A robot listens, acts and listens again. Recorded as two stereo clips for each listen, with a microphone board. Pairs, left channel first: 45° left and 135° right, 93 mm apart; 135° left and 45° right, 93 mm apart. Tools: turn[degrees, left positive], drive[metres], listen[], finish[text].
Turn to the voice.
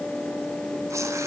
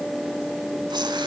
Action: listen[]
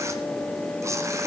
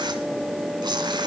Action: listen[]
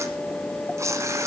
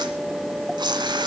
Action: finish[I can't make out anyone speaking, only tearing paper.]